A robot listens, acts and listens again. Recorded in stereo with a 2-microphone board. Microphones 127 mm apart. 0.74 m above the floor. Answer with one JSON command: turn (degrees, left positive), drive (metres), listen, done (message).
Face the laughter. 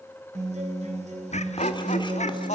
{"turn": 65}
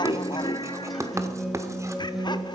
{"turn": 40}
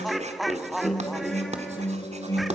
{"done": "Facing the laughter, 1 to 2 m away."}